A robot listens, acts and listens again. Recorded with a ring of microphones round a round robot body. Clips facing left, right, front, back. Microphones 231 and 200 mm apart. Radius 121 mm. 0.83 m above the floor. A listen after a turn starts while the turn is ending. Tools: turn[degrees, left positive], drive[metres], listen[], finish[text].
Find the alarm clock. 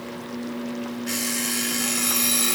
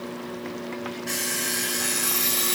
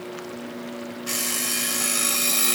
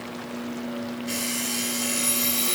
Action: finish[Facing the alarm clock, over 4 m away.]